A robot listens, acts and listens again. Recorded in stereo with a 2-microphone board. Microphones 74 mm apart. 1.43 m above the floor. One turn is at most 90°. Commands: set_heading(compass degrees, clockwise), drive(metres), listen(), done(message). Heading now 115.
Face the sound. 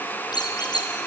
set_heading(25)
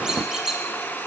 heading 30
done("Found it: a squeak, straight ahead, over 4 m away.")